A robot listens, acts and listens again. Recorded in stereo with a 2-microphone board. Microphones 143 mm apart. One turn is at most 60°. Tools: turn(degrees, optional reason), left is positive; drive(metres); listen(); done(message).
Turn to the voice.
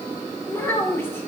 turn(degrees=15, reason="The child speaking: about 15° left or 165° left.")
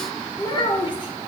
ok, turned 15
turn(degrees=60, reason="So it is at 150° left.")
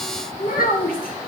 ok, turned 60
turn(degrees=60, reason="The child speaking is now 90° left.")
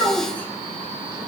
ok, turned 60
turn(degrees=15, reason="The child speaking is now 15° left.")
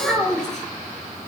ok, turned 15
done("Facing the child speaking.")